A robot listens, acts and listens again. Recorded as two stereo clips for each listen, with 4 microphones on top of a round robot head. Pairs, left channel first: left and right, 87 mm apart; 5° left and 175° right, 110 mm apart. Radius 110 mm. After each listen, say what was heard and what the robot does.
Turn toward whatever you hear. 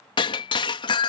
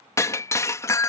The breaking glass: 65° left. Turn 65° left.
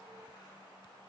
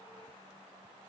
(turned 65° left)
Facing where the breaking glass came from. I can't hear it now.